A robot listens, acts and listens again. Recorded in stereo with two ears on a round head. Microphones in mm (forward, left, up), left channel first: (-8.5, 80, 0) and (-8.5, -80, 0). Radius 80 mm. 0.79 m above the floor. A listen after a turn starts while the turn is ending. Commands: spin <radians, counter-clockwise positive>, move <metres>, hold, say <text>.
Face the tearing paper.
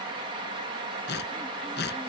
spin 1.13
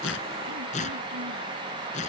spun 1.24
spin 0.70
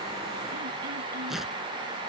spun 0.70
say Facing the tearing paper.